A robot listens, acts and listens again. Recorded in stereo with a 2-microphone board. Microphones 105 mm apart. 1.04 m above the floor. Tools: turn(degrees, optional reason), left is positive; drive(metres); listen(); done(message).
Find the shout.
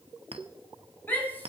turn(degrees=20, reason="The shout: about 20° left or 160° left.")
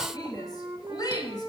turn(degrees=140, reason="So it is at 140° left.")
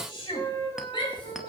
turn(degrees=55, reason="The shout is now 55° left.")
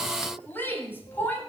turn(degrees=20, reason="The shout is now 20° left.")
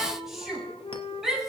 done("Found it: a shout, straight ahead, over 4 m away.")